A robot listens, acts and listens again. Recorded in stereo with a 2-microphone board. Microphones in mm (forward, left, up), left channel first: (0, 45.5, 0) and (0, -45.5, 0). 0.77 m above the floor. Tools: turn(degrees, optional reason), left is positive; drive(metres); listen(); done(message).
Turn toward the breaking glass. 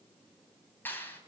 listen()
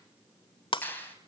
turn(degrees=70, reason="The breaking glass: about 70° left or 110° left.")
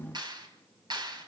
listen()
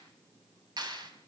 done("I heard breaking glass, but can't make it out now. It was about straight ahead or 40° left.")